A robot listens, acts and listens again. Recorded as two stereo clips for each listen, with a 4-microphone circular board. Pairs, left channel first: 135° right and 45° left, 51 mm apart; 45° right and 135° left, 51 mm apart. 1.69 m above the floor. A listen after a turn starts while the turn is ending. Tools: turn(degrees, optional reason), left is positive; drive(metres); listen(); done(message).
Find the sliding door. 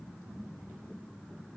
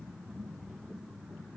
listen()
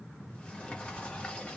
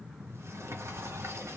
turn(degrees=160, reason="The sliding door: 160° left.")
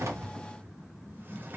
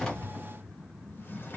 done("Found it: a sliding door, straight ahead, 1 to 2 m away.")